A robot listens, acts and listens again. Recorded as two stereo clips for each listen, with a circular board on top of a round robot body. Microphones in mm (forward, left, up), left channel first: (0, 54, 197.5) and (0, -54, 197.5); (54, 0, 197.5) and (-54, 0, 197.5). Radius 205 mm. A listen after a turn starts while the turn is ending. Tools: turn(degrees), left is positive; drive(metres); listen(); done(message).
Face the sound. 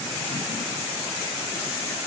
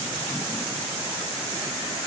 listen()
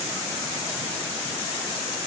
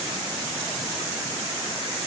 listen()
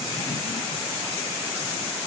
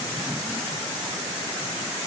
done("I can't make out anything.")